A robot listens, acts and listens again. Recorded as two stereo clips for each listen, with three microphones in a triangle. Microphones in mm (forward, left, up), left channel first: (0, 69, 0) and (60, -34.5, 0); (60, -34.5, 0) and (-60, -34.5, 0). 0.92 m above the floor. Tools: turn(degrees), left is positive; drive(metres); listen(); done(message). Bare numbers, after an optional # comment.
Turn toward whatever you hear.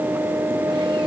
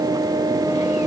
listen()
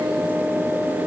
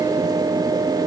listen()
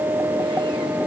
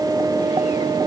done("I can't make out anything to turn to.")